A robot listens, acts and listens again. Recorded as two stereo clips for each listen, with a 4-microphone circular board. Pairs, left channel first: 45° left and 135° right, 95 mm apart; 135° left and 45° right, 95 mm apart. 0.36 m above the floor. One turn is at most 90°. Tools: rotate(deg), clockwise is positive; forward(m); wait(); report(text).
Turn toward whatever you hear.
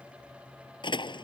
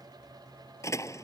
rotate(-80)
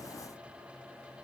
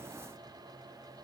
report("Facing where the door slam came from. I can't hear it now.")